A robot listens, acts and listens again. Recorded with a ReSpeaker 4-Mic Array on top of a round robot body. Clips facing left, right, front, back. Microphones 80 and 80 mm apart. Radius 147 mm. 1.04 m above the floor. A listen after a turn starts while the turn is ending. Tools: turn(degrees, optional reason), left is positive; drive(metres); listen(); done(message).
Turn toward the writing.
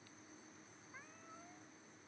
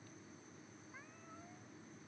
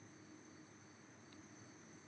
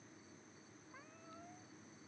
listen()
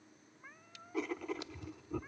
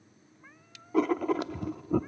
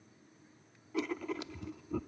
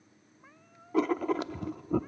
turn(degrees=-130, reason="The writing: 130° right.")
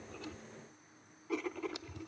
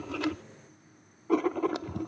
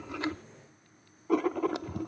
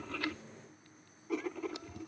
turn(degrees=-45, reason="The writing is now 45° right.")
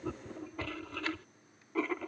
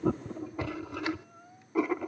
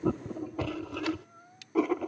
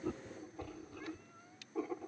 turn(degrees=-15, reason="The writing is now 15° right.")
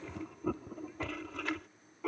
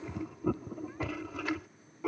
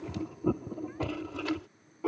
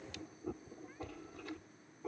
done("Found it: writing, straight ahead.")